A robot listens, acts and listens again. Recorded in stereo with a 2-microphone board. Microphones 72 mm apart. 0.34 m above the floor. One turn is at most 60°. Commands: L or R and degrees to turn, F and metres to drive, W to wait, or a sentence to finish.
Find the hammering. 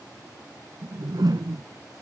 W
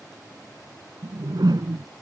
W
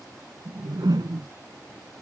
I can't make out hammering to turn to.